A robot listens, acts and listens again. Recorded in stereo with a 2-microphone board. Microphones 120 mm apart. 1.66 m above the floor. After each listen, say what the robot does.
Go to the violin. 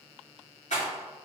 Keep listening.
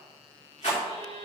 Turn 45° right.
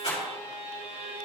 Turn 90° right.
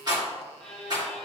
Drive 1.0 m forward.
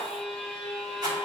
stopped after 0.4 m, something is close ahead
Turn 10° left.
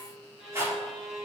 Blocked. The violin is further on, straight ahead.